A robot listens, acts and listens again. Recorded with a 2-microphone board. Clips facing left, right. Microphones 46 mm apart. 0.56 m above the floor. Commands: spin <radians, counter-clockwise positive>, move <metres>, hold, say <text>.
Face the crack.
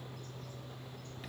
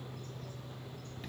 hold
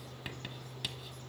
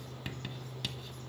hold
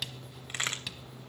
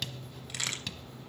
spin 0.61
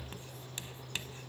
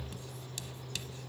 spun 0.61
hold
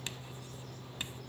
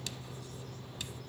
say I heard a crack, but can't make it out now. It was about straight ahead or 110° left.